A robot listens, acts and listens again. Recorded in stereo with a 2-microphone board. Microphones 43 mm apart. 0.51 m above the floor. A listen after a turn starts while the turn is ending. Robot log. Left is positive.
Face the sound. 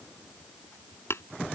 note: The tapping: about 75° left or 105° left.
cmd yaw +75
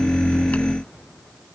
cmd idle
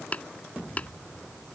note: So it is at 35° left.
cmd yaw +35
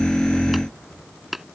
end: Found it: tapping, straight ahead.